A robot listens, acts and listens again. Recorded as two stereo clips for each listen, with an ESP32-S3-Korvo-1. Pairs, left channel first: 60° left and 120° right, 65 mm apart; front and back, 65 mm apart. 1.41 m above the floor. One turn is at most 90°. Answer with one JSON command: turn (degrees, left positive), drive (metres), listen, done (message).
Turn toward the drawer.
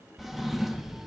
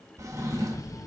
{"turn": 90}
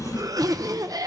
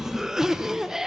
{"turn": 90}
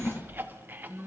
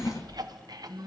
{"turn": 10}
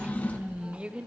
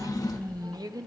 {"done": "Facing the drawer, 1 to 2 m away."}